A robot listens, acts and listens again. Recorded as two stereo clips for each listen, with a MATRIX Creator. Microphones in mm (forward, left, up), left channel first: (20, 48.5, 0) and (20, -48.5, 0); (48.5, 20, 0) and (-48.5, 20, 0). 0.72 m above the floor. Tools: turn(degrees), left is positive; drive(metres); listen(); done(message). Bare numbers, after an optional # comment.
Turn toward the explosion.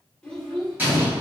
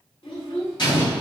# The explosion: 25° right.
turn(-25)
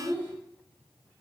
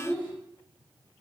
done("I heard an explosion from this way, but can't make it out now.")